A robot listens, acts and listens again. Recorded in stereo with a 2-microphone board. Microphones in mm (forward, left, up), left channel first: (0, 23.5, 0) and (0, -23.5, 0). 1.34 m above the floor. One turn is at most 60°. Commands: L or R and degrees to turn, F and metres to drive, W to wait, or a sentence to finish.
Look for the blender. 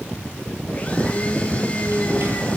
L30
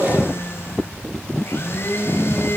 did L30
L60
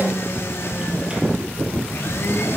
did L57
L60
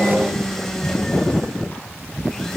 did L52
L10
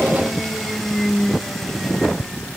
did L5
Facing the blender.